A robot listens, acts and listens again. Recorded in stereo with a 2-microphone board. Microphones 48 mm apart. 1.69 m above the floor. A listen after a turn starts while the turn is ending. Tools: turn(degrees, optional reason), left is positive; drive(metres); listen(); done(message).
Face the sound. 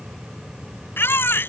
turn(degrees=50, reason="The baby crying: about 50° left or 130° left.")
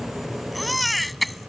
done("Facing the baby crying.")